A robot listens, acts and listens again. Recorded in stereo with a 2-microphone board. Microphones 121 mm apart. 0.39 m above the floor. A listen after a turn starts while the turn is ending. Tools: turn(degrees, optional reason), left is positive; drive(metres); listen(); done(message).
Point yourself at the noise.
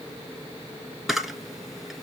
turn(degrees=-30)
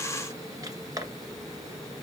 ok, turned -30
turn(degrees=-150, reason="So it is at 150° right.")
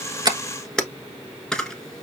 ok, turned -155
done("Facing the camera shutter.")